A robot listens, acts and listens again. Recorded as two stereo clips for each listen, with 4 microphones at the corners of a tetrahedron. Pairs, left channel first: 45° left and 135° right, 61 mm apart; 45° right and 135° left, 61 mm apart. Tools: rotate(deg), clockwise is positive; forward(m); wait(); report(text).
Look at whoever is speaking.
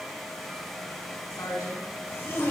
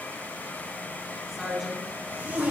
rotate(-45)
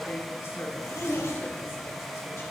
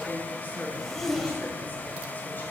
report("Found it: a woman speaking, straight ahead, over 4 m away.")